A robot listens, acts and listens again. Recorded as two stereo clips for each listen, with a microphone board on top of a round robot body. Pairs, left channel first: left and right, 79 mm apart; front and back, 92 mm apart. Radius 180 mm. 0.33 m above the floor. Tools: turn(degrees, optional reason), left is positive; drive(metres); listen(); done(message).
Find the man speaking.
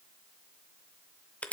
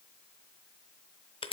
listen()
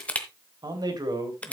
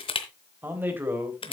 turn(degrees=-115, reason="The man speaking: 115° right.")
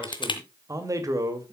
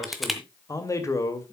turn(degrees=-55, reason="The man speaking is now 55° right.")
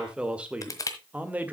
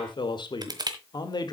turn(degrees=-25, reason="The man speaking is now 25° right.")
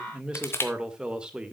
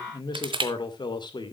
turn(degrees=-15, reason="The man speaking is now 15° right.")
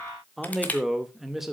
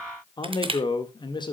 done("Facing the man speaking, 1 to 2 m away.")